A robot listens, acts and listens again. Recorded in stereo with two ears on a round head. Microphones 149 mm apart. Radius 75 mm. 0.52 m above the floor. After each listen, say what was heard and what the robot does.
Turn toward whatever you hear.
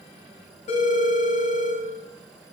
The phone ringing: about 40° left or 140° left. Turn 40° left.
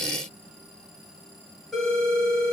Facing the phone ringing.